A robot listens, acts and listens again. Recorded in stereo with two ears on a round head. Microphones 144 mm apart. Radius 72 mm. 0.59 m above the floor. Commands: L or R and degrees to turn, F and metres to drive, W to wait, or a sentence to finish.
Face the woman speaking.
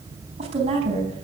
R40
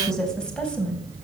Found it: a woman speaking, straight ahead.